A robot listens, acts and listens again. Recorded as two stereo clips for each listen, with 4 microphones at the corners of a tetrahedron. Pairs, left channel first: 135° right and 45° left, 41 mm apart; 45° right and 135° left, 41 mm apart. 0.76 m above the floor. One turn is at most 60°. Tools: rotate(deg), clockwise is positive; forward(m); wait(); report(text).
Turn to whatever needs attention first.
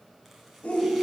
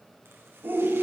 rotate(-60)
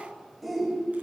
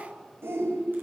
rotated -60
rotate(-60)
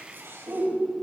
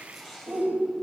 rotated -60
rotate(-60)
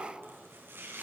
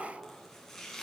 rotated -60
rotate(-60)
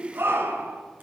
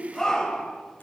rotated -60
rotate(-30)
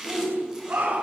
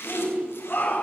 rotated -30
report("Found it: a shout, straight ahead, over 4 m away.")